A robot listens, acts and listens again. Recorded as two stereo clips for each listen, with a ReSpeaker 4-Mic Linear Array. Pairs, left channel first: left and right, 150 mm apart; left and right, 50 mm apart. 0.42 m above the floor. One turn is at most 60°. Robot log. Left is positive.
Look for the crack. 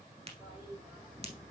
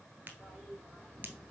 note: The crack: about 45° right or 135° right.
cmd yaw -45
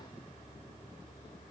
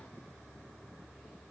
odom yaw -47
cmd idle
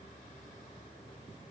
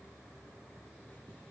end: I heard a crack, but can't make it out now. It was about 5° left or 90° right.